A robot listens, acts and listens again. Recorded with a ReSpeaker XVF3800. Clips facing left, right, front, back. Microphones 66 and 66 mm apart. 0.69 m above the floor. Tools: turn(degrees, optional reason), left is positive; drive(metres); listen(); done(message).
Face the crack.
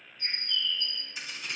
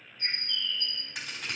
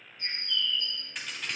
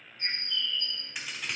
turn(degrees=-95, reason="The crack: 95° right.")
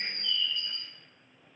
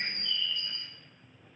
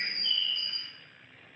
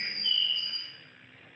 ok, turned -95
done("Facing where the crack came from. I can't hear it now.")